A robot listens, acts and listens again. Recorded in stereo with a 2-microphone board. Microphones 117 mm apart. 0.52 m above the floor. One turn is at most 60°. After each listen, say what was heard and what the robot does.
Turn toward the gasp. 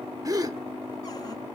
The gasp: about 30° right or 150° right. Turn 30° right.
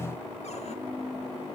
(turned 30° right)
Keep listening.
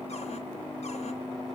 I heard a gasp, but can't make it out now. It was about straight ahead or 120° right.